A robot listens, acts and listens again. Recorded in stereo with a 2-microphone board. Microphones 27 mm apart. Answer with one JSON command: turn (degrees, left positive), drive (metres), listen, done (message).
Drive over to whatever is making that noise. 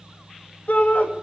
{"turn": 70}
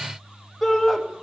{"drive": 1.0}
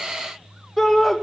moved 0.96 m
{"drive": 1.0}
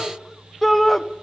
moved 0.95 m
{"drive": 1.0}
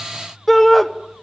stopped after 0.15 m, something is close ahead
{"done": "Arrived at the shout, straight ahead."}